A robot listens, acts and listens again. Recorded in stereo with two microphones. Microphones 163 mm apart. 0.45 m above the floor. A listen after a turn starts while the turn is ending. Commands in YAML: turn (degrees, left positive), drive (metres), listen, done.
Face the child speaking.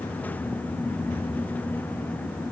listen: true
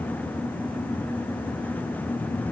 listen: true
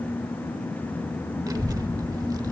turn: -20
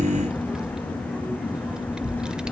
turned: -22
done: "Found it: a child speaking, straight ahead, 1 to 2 m away."